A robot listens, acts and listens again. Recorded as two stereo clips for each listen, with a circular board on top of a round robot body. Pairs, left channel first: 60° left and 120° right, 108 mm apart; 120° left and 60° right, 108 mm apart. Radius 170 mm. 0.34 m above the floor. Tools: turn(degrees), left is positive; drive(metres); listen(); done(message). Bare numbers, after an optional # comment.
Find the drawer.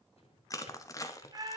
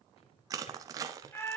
# The drawer: 90° left.
turn(90)
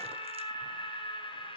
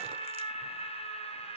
listen()
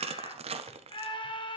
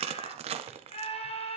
listen()
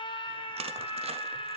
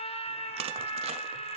done("Facing where the drawer came from. I can't hear it now.")